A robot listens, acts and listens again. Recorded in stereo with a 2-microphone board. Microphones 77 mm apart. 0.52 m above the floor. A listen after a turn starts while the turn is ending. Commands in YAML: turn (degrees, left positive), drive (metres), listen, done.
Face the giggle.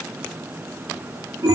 listen: true
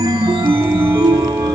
listen: true
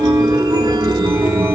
done: "I can't make out a giggle, only a chime."